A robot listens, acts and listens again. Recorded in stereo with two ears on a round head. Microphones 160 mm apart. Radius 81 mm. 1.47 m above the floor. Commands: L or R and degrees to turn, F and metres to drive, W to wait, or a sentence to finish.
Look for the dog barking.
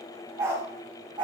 R25
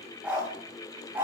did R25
R30
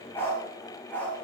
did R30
L10
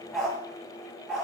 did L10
Found it: a dog barking, straight ahead, over 4 m away.